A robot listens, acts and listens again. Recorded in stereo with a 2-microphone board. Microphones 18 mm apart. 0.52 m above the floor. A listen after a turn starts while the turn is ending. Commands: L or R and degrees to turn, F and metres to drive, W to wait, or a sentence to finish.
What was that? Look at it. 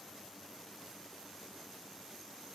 W
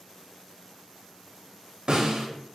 R90
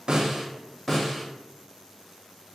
Found it: a snare drum, straight ahead, 1 to 2 m away.